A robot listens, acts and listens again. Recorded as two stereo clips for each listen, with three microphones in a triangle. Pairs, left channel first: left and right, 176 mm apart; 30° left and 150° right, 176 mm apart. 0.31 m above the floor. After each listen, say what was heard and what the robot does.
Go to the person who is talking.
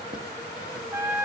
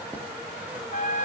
Keep listening.
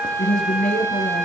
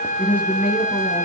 The woman speaking: 130° left. Turn 130° left.
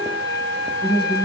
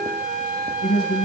The woman speaking is now 35° left. Turn 35° left.
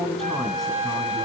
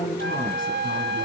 Drive 1.0 m forward.
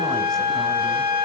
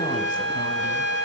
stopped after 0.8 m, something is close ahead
Keep listening.
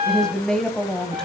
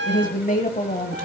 Arrived at the woman speaking, straight ahead.